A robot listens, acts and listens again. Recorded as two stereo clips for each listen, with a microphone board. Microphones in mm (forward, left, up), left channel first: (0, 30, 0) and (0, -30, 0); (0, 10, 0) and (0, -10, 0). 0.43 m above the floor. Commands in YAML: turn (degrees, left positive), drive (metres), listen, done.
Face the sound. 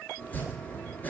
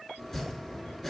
turn: 25
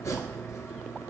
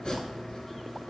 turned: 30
turn: 125
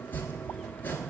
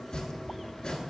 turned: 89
turn: 35
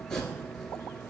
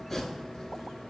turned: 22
turn: 15
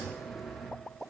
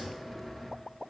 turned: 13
done: "Found it: chopping, straight ahead, 1 to 2 m away."